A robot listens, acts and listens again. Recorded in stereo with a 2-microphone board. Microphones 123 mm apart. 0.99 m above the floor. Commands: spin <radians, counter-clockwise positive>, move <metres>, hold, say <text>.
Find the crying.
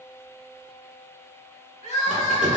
spin 1.13
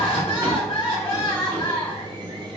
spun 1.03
spin 0.87
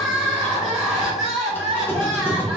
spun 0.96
say Found it: crying, straight ahead, 1 to 2 m away.